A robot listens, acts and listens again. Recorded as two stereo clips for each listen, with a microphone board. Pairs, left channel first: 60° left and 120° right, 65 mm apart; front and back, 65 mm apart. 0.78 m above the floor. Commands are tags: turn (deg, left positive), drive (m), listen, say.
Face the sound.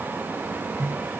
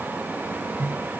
<turn deg="150"/>
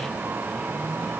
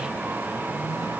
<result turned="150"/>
<listen/>
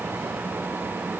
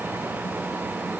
<listen/>
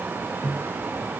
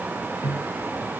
<turn deg="-15"/>
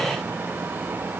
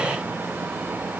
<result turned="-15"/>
<listen/>
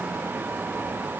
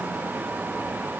<listen/>
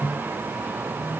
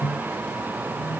<say>Found it: a microwave, straight ahead.</say>